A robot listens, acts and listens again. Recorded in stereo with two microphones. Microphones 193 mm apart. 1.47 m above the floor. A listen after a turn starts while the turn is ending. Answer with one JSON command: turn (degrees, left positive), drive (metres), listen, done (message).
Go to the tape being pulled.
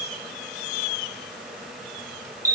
{"listen": true}
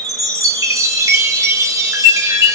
{"listen": true}
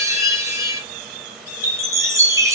{"done": "I can't make out tape being pulled to turn to."}